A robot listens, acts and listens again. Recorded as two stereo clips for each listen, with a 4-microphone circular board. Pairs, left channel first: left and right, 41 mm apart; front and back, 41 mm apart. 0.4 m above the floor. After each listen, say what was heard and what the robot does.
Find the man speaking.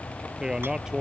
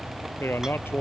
The man speaking: 15° right. Turn 15° right.
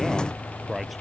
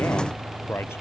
Found it: a man speaking, straight ahead.